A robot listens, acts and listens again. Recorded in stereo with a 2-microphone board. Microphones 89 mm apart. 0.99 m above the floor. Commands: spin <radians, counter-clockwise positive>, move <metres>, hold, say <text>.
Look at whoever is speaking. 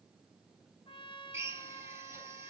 hold
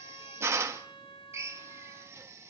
hold
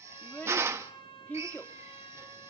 spin 0.35
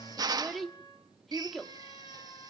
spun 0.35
say Found it: a child speaking, straight ahead.